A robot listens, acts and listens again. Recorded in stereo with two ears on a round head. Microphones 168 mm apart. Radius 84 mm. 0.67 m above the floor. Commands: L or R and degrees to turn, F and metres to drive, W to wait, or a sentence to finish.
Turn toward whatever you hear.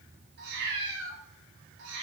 R70
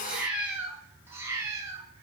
R20
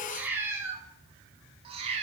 R35
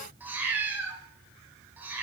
R10
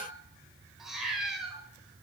Facing the cat meowing.